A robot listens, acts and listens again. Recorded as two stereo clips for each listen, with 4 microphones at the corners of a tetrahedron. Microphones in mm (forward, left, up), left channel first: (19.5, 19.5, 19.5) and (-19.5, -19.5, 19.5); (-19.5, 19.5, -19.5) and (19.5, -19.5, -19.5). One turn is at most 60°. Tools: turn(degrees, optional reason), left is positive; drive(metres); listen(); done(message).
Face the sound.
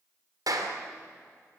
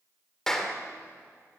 turn(degrees=-60, reason="The clap: 145° right.")
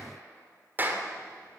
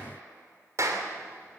turn(degrees=-60, reason="The clap is now 80° right.")
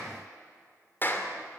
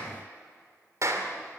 turn(degrees=-10, reason="The clap is now 10° right.")
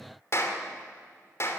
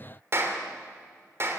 done("Found it: a clap, straight ahead.")